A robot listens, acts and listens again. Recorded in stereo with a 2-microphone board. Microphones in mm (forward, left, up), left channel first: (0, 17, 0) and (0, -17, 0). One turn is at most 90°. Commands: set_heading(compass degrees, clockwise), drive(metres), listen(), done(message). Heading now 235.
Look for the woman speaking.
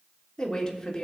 set_heading(220)
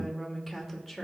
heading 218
set_heading(188)
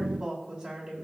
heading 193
set_heading(223)
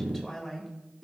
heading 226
done("Facing the woman speaking, 2 to 4 m away.")